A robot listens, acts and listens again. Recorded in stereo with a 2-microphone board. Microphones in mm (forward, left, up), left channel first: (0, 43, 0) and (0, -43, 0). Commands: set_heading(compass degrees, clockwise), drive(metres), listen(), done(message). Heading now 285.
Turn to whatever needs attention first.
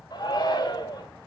set_heading(235)
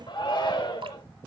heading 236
set_heading(166)
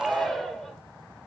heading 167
done("Found it: a shout, straight ahead.")